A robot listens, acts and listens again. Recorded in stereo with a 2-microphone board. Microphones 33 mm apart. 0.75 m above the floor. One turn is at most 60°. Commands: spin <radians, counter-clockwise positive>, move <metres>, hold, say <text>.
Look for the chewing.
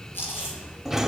spin 1.05
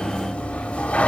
spin 0.52
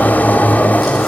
hold
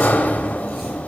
say I heard chewing from this way, but can't make it out now.